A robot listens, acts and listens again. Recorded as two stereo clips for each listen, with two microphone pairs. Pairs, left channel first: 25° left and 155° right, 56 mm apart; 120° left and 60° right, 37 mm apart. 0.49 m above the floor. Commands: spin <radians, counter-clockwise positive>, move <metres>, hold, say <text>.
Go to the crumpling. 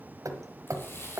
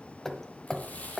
spin 1.31
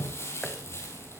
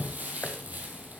spin -0.26
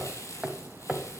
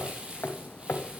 move 1.0
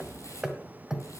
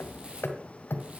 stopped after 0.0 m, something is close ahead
say Something is in my way. I am facing the crumpling but have not reached it.